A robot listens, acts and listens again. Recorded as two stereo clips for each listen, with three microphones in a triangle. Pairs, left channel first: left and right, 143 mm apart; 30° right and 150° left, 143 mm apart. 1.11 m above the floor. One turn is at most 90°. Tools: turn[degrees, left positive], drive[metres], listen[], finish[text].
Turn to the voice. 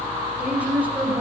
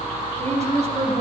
Thought: The woman speaking: 170° right.
Action: turn[-90]
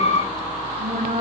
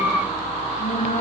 Thought: The woman speaking is now 70° right.
Action: turn[-70]
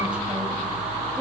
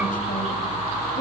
Action: listen[]
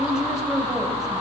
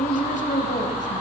Action: finish[Facing the woman speaking.]